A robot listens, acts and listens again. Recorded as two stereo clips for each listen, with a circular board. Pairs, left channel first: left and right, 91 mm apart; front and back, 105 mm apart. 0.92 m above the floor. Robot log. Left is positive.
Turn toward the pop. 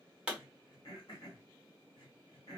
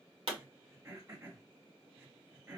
note: The pop: 170° right.
cmd yaw -170
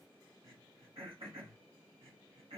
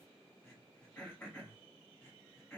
end: I heard a pop from this way, but can't make it out now.